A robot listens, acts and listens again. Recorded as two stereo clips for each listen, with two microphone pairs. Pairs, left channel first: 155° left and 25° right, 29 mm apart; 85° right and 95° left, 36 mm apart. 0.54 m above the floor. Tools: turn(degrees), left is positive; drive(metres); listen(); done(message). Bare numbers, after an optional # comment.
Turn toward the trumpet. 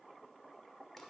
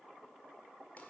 listen()
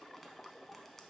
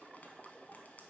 listen()
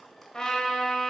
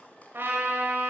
# The trumpet: 90° left.
turn(90)
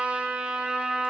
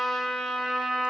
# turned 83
# The trumpet is now 10° left.
turn(10)
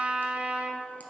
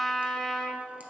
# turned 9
done("Found it: a trumpet, straight ahead, under 1 m away.")